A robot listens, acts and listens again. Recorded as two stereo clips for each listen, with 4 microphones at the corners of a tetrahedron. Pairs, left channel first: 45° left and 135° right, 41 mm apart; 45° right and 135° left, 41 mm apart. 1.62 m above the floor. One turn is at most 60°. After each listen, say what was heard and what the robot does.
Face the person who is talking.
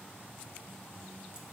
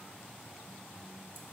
Keep listening.
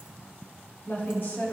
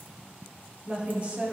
The woman speaking: 80° left. Turn 60° left.
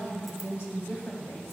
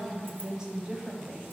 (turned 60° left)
The woman speaking is now 65° left. Turn 60° left.
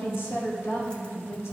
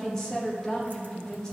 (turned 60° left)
The woman speaking is now 30° left. Turn 30° left.
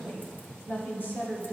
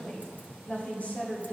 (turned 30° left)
The woman speaking is now 10° left. Turn 10° left.
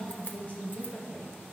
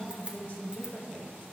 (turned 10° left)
Facing the woman speaking.